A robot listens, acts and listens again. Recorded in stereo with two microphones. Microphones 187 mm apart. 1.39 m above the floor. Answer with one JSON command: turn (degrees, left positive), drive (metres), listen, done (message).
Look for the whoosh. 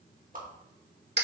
{"turn": -50}
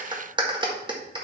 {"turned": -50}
{"listen": true}
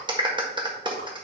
{"listen": true}
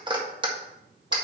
{"done": "I heard a whoosh, but can't make it out now. It was about straight ahead or 80° right."}